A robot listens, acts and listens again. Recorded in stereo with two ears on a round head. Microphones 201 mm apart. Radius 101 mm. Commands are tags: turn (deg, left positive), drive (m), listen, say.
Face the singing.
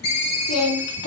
<turn deg="70"/>
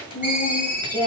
<turn deg="10"/>
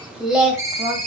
<turn deg="-15"/>
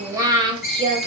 <turn deg="-30"/>
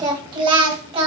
<turn deg="-25"/>
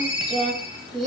<say>Found it: singing, straight ahead, 2 to 4 m away.</say>